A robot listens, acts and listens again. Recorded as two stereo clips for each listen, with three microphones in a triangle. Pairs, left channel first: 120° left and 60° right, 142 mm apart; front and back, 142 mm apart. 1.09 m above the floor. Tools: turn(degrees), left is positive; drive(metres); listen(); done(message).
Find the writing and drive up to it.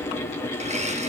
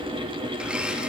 listen()
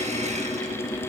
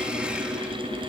listen()
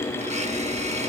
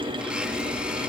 done("I can't make out writing, only a blender.")